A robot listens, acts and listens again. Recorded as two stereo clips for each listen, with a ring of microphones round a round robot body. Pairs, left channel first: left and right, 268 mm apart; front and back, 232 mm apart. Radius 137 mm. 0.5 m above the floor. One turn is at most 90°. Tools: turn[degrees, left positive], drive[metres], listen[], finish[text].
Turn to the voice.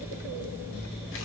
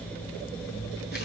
Action: listen[]
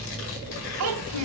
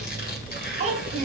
Thought: The child speaking: 115° right.
Action: turn[-90]
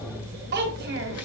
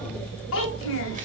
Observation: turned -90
Thought: The child speaking is now 40° right.
Action: turn[-40]
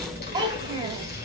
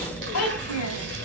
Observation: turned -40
Thought: The child speaking is now 15° right.
Action: turn[-15]
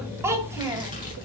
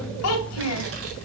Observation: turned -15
Thought: The child speaking is now 10° right.
Action: turn[-10]
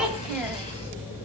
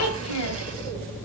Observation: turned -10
Action: finish[Found it: a child speaking, straight ahead, 1 to 2 m away.]